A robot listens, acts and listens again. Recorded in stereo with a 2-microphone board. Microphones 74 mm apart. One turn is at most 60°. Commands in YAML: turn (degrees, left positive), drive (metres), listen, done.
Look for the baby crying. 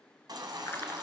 turn: -60
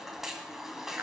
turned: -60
done: "Found it: a baby crying, straight ahead, 1 to 2 m away."